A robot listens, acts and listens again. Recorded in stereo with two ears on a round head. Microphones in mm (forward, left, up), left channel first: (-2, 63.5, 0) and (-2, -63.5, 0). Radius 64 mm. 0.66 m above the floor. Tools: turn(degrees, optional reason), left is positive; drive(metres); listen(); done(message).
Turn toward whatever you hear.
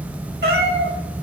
turn(degrees=-90)
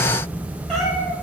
done("Found it: a cat meowing, straight ahead.")